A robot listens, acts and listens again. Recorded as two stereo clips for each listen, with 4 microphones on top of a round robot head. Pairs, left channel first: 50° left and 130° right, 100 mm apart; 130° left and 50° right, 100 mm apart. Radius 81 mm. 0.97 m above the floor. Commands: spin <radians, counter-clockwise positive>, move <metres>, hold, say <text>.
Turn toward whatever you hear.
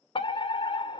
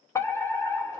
spin 1.22
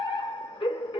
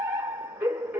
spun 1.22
spin 0.35
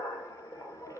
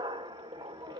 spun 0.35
say Facing the fire alarm.